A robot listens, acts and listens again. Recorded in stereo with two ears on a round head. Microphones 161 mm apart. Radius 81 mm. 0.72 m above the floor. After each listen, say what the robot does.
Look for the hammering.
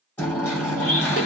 Turn 30° left.
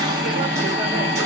Turn 15° right.
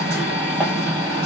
Found it: hammering, straight ahead.